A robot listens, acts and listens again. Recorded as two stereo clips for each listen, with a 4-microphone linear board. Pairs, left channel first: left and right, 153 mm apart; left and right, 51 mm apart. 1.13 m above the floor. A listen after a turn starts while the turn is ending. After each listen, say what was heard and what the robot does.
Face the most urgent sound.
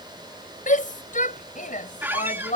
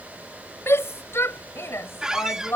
The shout: about 60° left or 120° left. Turn 60° left.
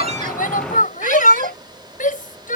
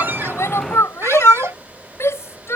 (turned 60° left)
So it is at 60° left. Turn 60° left.
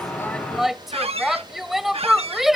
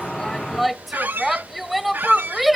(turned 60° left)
Facing the shout.